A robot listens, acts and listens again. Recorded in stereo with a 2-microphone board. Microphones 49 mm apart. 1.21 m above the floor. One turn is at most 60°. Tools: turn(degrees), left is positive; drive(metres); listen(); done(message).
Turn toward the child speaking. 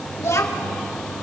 turn(degrees=60)
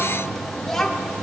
turn(degrees=10)
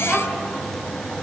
done("Facing the child speaking.")